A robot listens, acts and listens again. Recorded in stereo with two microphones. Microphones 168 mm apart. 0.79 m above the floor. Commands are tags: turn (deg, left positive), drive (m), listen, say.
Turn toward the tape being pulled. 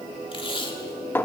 <turn deg="30"/>
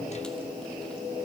<listen/>
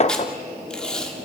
<say>Facing the tape being pulled, 2 to 4 m away.</say>